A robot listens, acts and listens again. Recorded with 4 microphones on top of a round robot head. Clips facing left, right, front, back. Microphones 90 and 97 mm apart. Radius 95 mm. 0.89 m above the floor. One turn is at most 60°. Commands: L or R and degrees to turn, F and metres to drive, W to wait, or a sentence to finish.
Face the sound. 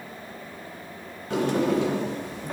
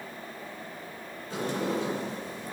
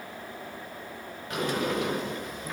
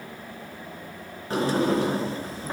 L60
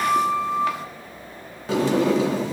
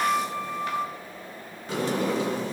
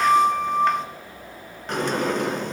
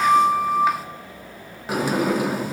L60
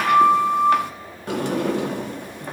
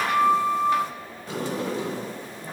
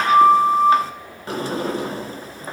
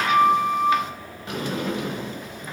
L60
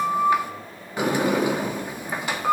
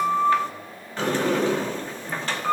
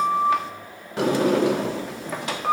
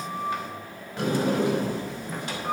L10
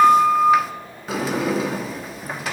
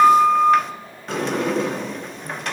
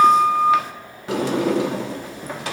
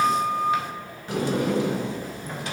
Found it: a sliding door, straight ahead.